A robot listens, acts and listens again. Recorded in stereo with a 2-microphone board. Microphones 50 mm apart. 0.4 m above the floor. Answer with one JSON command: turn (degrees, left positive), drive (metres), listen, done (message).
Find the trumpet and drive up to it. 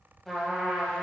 {"turn": 30}
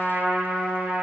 {"turn": -25}
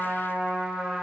{"drive": 1.0}
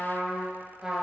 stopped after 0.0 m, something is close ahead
{"done": "Something is in my way. I am facing the trumpet but have not reached it."}